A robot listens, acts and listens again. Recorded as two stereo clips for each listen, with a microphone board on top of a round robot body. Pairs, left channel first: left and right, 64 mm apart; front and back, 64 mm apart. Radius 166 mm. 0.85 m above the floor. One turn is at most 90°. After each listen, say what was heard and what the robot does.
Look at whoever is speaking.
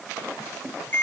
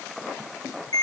Keep listening.
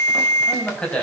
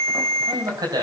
The man speaking: 165° left. Turn 90° left.
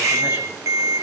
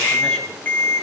Nothing new. It was at 75° left. Turn 75° left.
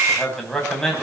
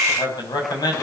Facing the man speaking, over 4 m away.